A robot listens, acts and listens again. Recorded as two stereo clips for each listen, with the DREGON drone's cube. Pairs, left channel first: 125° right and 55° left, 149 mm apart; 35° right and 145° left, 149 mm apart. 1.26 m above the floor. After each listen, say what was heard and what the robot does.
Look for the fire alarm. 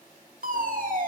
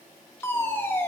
The fire alarm: 40° left. Turn 40° left.
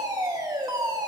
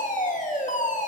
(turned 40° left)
Found it: a fire alarm, straight ahead.